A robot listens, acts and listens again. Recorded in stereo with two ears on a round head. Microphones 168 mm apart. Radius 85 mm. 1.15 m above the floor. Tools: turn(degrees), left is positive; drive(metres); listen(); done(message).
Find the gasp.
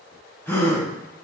turn(degrees=30)
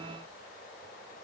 listen()
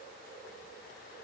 done("I heard a gasp, but can't make it out now. It was about 20° right or 140° left.")